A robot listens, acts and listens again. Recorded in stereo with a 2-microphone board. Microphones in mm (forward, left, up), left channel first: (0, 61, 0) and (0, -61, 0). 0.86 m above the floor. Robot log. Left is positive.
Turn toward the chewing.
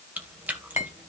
cmd yaw -30
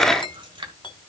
note: So it is at 140° right.
cmd yaw -140
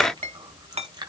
note: The chewing is now 35° right.
cmd yaw -35
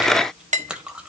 note: The chewing is now 10° right.
cmd yaw -10
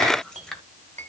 end: Facing the chewing, 2 to 4 m away.